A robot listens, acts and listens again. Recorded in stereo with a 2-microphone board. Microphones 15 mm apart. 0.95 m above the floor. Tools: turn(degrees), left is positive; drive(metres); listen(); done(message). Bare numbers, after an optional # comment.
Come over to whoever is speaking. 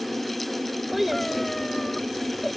turn(-30)
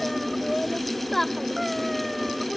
# So it is at 20° left.
turn(20)
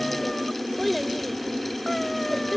drive(1.0)
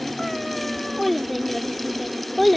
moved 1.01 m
drive(1.0)
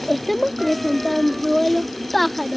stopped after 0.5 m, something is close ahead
# The child speaking is now 15° left.
turn(15)
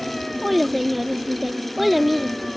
done("Arrived at the child speaking, straight ahead.")